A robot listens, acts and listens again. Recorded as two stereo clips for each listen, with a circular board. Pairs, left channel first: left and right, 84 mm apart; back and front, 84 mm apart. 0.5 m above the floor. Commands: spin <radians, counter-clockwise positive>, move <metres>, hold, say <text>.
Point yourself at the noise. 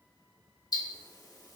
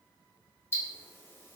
spin 2.09
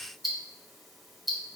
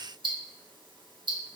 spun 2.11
say Found it: ticking, straight ahead, 1 to 2 m away.